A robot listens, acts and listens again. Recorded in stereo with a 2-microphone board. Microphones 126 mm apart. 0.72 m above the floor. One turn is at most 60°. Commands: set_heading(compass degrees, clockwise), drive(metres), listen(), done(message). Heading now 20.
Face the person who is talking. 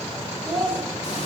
set_heading(350)
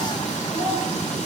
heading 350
listen()
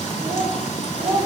set_heading(5)
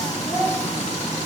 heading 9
done("Facing the child speaking, 2 to 4 m away.")